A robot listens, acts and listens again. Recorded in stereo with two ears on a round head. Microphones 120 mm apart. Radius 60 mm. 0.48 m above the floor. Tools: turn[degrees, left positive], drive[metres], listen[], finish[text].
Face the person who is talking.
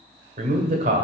Thought: The man speaking: about 60° right or 120° right.
Action: turn[-60]
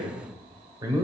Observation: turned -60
Thought: So it is at 30° right.
Action: turn[-30]
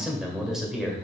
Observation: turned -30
Action: finish[Found it: a man speaking, straight ahead.]